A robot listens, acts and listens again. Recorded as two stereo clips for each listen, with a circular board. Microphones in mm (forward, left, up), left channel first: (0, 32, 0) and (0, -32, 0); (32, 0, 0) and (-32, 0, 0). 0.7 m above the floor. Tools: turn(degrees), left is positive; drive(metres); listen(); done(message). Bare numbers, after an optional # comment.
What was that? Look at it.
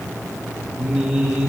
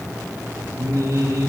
# The singing: 160° right.
turn(-160)
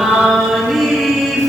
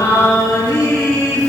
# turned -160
done("Found it: singing, straight ahead, over 4 m away.")